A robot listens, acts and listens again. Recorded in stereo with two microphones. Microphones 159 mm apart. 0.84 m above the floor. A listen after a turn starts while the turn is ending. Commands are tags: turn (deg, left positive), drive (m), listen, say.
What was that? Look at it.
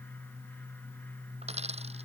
<turn deg="-40"/>
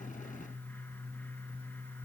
<listen/>
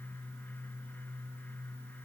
<say>I heard a dropped coin, but can't make it out now. It was about straight ahead or 100° right.</say>